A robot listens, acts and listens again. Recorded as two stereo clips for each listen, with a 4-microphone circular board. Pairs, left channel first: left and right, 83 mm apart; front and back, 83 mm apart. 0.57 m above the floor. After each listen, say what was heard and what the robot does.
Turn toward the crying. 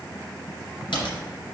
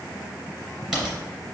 Keep listening.
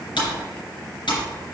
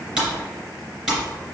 Keep listening.
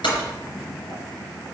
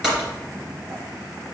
I can't make out crying, only typing on a keyboard.